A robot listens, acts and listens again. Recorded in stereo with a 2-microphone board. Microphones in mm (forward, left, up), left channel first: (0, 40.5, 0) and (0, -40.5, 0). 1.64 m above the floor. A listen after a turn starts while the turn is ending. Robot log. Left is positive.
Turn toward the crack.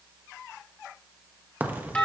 note: The crack: about 20° right or 160° right.
cmd yaw -20
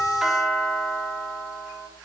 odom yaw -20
cmd idle
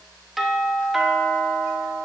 end: I heard a crack, but can't make it out now. It was about straight ahead or 140° right.